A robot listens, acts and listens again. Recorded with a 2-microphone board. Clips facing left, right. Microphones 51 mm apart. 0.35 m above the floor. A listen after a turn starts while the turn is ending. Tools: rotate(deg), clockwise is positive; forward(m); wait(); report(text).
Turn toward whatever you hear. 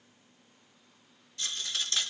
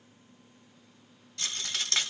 rotate(70)
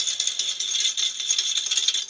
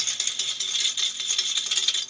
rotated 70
rotate(15)
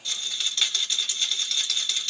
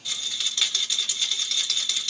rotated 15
report("Found it: a rattle, straight ahead.")